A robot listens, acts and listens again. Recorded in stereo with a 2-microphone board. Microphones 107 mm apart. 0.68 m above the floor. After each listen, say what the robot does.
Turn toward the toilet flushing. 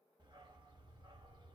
Keep listening.
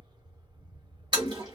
Turn 45° right.
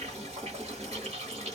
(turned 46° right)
Turn 90° right.
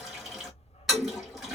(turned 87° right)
Facing the toilet flushing.